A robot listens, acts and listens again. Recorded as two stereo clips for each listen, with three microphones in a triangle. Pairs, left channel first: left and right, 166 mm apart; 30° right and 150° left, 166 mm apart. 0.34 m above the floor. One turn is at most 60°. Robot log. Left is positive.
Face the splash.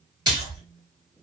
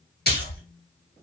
note: The splash: 25° right.
cmd yaw -25
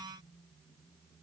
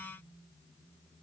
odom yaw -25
end: I heard a splash from this way, but can't make it out now.